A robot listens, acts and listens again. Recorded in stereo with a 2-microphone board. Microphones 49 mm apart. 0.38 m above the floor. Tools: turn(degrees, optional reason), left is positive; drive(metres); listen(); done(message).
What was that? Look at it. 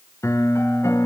turn(degrees=90)
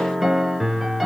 done("Facing the piano.")